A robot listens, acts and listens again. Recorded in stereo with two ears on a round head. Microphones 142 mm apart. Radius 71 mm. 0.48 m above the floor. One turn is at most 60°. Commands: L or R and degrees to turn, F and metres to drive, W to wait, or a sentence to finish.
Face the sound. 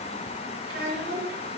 R60
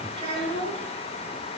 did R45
R30
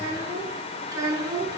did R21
R25
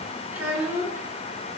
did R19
R15
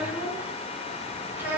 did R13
R10
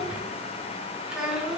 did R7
Facing the child speaking.